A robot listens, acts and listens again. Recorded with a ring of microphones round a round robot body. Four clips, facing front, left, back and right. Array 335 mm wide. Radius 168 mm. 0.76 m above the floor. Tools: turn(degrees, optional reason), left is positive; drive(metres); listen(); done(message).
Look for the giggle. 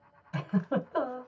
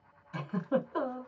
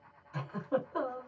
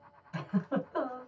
done("Facing the giggle.")